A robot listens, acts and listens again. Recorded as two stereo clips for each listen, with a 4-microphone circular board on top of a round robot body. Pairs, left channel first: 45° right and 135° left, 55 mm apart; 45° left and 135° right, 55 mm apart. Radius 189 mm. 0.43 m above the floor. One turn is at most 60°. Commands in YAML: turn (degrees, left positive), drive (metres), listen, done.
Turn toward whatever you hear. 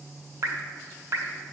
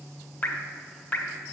turn: 60
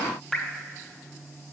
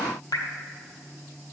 turn: 40
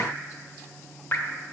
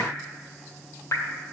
done: "Found it: dripping, straight ahead."